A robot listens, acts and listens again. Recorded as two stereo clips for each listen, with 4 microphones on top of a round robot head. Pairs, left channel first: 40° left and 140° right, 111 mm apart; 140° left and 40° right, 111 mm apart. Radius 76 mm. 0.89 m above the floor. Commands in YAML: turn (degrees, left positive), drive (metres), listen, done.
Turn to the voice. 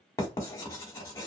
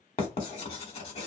listen: true
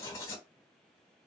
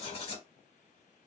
listen: true
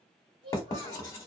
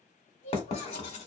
turn: 170
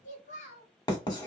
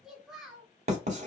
turn: 50
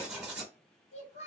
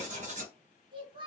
turn: 10
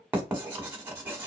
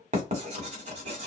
listen: true
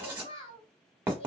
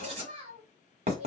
done: "Facing the child speaking, 1 to 2 m away."